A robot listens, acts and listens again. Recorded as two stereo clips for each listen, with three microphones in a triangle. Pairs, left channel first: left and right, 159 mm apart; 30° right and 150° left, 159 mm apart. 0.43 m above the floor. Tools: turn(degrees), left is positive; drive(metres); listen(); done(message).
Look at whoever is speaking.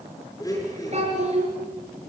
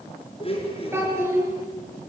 turn(degrees=-135)
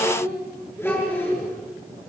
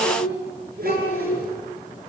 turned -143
turn(degrees=10)
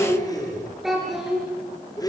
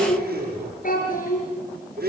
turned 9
done("Facing the child speaking.")